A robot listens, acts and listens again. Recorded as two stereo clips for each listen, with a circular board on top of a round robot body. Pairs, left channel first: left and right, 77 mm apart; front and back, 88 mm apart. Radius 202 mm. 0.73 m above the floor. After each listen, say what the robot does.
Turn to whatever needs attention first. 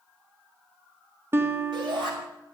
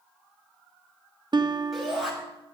Turn 90° right.
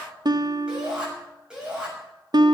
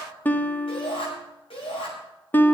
Turn 10° right.
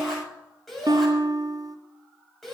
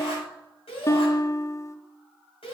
Found it: a shout, straight ahead.